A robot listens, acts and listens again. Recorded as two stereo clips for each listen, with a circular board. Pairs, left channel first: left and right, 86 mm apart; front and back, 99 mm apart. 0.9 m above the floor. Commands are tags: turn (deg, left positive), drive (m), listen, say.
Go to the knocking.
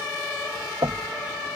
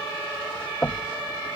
<turn deg="-80"/>
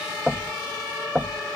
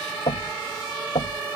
<turn deg="-10"/>
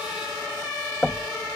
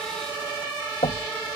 <drive m="1.0"/>
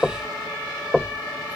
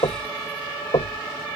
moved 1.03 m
<drive m="1.0"/>
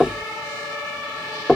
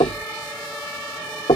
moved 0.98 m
<drive m="1.0"/>
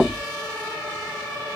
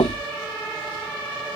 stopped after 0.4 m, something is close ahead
<say>Arrived at the knocking, straight ahead.</say>